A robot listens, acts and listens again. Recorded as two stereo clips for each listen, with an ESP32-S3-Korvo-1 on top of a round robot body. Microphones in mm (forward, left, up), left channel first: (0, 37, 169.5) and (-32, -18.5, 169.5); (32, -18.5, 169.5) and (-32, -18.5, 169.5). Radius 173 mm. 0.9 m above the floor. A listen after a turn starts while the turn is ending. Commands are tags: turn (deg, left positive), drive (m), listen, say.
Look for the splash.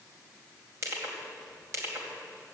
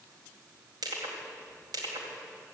<listen/>
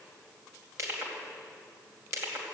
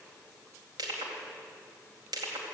<listen/>
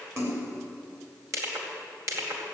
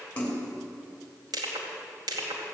<turn deg="-70"/>
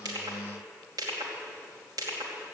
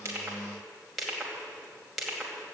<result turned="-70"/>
<say>Facing where the splash came from. I can't hear it now.</say>